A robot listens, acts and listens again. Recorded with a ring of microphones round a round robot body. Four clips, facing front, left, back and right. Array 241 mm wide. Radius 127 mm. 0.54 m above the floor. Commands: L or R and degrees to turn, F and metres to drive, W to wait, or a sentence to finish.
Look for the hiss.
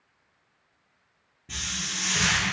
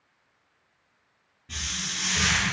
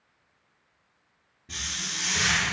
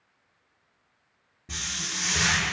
R85
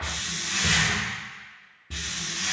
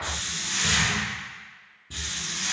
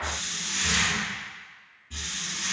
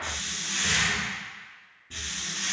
L10
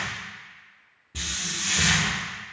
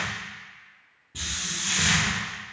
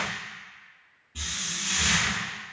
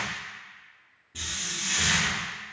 Found it: a hiss, straight ahead.